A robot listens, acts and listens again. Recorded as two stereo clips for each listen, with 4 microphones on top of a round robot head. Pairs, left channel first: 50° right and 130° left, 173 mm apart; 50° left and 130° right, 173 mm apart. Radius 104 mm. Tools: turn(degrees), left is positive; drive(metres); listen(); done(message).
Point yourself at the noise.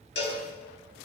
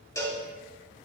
turn(degrees=-25)
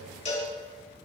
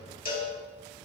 done("Facing the cowbell.")